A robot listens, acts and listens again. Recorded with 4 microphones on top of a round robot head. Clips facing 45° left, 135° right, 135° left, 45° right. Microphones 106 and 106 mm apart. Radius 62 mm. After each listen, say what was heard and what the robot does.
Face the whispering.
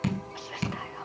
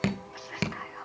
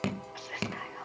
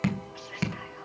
The whispering: 120° left. Turn 120° left.
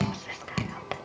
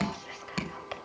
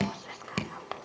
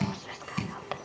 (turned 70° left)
The whispering is now 45° left. Turn 45° left.
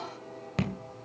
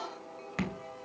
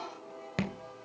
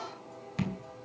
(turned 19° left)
Nothing new. It was at 25° left. Turn 25° left.
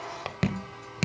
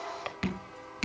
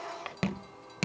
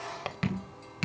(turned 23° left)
Found it: whispering, straight ahead.